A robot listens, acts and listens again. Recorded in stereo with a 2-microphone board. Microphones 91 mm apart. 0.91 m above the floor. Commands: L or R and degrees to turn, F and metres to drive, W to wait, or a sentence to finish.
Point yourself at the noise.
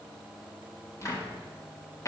L35
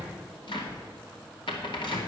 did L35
L110
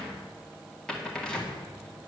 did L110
L10
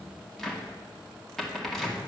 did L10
Facing the cupboard door.